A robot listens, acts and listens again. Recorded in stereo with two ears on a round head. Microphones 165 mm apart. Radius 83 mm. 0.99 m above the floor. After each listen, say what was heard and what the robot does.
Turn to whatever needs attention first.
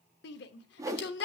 The shout: about 60° left or 120° left. Turn 60° left.
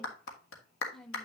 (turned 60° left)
Keep listening.
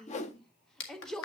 Found it: a shout, straight ahead.